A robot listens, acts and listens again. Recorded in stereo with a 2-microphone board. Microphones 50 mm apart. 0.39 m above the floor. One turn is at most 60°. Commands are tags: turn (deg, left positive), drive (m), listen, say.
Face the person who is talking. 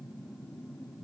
<listen/>
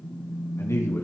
<turn deg="60"/>
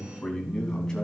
<turn deg="15"/>
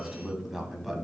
<turn deg="-10"/>
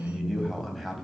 <say>Facing the man speaking.</say>